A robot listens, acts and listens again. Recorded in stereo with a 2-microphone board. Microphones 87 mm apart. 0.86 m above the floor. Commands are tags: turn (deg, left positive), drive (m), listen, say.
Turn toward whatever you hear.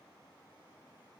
<listen/>
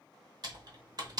<turn deg="-50"/>
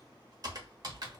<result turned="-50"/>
<turn deg="-60"/>
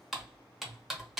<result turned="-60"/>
<say>Facing the typing on a keyboard.</say>